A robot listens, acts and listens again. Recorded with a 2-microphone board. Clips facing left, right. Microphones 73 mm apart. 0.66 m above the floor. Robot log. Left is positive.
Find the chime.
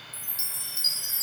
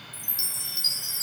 note: The chime: about 40° left or 140° left.
cmd yaw +40
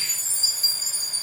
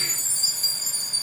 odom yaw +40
note: So it is at 10° left.
cmd yaw +10
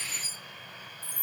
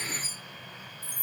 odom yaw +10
end: Facing the chime, 1 to 2 m away.